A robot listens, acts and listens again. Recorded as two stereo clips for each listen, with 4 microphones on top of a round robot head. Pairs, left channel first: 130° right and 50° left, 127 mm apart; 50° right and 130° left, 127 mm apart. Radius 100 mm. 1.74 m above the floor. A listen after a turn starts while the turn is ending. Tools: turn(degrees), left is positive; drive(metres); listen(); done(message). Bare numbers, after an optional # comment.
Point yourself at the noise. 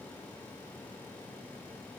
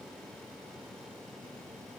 listen()
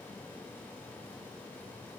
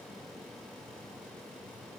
listen()
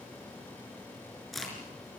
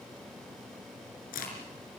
# The crack: 40° right.
turn(-40)
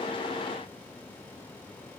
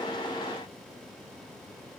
done("Facing where the crack came from. I can't hear it now.")